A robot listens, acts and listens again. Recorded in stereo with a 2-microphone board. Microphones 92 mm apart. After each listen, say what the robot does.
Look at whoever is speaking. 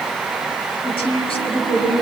Turn 90° left.
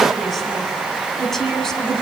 Facing the woman speaking, over 4 m away.